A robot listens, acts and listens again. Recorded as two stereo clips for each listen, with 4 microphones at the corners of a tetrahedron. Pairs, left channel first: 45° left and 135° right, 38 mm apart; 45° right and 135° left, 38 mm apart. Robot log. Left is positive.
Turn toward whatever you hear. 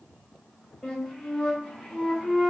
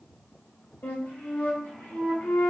note: The flute: 50° right.
cmd yaw -50
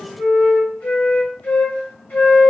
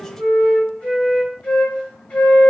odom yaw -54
end: Facing the flute.